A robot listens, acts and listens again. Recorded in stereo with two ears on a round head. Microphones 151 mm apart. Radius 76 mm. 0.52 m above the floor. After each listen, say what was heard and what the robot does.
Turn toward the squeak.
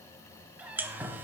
Turn 30° right.
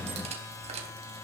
So it is at 140° right. Turn 140° right.
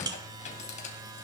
The squeak is now 45° left. Turn 45° left.
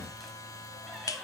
Keep listening.
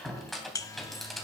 Found it: a squeak, straight ahead, 2 to 4 m away.